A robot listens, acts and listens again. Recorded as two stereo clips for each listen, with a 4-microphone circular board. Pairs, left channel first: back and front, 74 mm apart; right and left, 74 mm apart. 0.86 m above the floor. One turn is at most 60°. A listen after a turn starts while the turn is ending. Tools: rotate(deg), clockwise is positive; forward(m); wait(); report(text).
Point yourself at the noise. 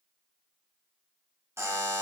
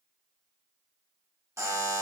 rotate(-50)
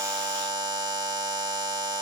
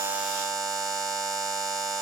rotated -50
report("Facing the buzzer, under 1 m away.")